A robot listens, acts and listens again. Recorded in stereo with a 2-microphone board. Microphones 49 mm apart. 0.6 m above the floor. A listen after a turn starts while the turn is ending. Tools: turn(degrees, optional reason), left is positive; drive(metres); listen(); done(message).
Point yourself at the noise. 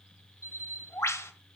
turn(degrees=90)
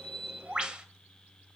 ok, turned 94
turn(degrees=-20, reason="So it is at 20° right.")
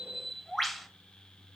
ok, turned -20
done("Found it: a bird, straight ahead, 1 to 2 m away.")